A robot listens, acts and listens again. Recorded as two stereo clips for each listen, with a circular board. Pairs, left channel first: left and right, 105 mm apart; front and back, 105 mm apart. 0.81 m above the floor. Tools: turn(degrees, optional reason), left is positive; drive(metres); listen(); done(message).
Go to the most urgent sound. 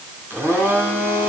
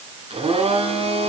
listen()
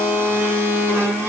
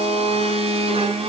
listen()
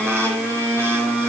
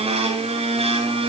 done("I can't make out anything urgent to turn to.")